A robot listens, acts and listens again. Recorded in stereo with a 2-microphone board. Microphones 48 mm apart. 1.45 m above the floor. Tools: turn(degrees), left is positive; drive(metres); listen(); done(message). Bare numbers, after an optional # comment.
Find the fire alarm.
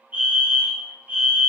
# The fire alarm: about 30° right or 150° right.
turn(-30)
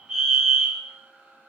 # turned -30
# So it is at 10° right.
turn(-10)
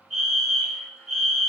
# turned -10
done("Found it: a fire alarm, straight ahead, 1 to 2 m away.")